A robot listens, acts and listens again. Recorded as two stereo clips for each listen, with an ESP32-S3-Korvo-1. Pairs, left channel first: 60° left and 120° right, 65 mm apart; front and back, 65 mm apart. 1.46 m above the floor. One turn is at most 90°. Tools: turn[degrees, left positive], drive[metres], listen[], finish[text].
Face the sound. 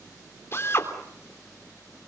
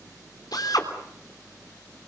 Thought: The drill: 10° left.
Action: turn[10]
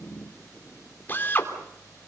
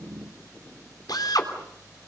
Action: finish[Facing the drill.]